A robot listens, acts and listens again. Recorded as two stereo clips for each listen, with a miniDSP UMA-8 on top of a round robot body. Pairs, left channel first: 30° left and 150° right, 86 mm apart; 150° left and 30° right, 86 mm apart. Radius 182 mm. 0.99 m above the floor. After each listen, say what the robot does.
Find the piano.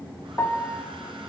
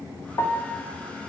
Turn 95° left.
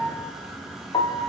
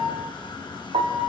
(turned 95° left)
Facing the piano.